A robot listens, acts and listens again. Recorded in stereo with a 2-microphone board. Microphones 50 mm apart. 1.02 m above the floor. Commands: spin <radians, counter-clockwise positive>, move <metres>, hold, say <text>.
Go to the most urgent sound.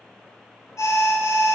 spin 1.57
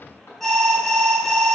move 1.0
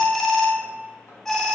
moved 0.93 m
spin 0.17
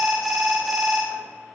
move 1.0
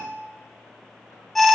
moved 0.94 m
move 1.0
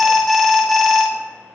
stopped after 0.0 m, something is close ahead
say I am next to the alarm.